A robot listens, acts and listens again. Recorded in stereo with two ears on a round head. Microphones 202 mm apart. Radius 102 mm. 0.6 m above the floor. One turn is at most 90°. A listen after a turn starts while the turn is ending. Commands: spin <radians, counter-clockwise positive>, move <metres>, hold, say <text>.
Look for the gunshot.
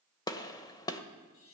spin 0.35
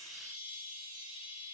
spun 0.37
hold
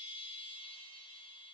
say I heard a gunshot, but can't make it out now. It was about 5° right or 140° left.